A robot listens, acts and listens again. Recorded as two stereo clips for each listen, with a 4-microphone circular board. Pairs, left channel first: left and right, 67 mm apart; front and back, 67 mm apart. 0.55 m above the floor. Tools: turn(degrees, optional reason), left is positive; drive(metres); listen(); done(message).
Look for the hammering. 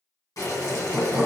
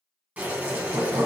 turn(degrees=-175, reason="The hammering: 175° right.")
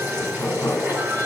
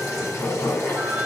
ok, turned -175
turn(degrees=35, reason="The hammering is now 35° left.")
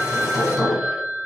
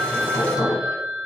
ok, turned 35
done("Found it: hammering, straight ahead.")